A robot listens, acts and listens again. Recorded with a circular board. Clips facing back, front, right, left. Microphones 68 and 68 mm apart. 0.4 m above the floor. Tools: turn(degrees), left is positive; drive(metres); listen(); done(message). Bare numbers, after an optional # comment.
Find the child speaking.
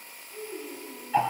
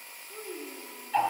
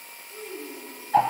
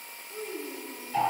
done("Found it: a child speaking, straight ahead, 2 to 4 m away.")